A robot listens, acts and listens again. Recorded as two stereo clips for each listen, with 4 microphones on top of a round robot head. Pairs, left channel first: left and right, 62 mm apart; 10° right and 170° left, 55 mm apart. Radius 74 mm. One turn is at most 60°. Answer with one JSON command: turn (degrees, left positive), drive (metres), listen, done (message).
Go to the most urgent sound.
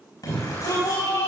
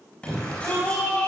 {"turn": 60}
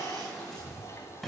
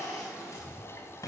{"drive": 1.0}
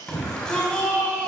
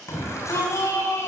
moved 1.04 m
{"turn": 15}
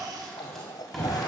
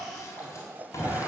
{"drive": 1.0}
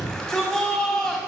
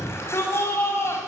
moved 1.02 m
{"turn": 10}
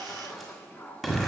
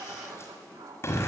{"drive": 1.0}
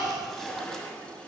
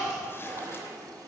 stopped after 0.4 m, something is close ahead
{"listen": true}
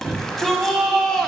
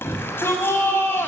{"turn": 10}
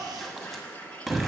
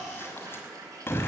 {"done": "Arrived at the shout, straight ahead."}